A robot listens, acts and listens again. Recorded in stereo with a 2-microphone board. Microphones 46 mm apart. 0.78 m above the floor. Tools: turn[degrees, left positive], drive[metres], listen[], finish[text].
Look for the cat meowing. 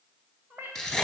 Thought: The cat meowing: about 40° right or 140° right.
Action: turn[-40]
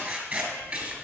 Action: listen[]
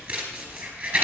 Action: listen[]
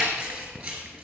Action: finish[I heard a cat meowing, but can't make it out now. It was about straight ahead or 100° right.]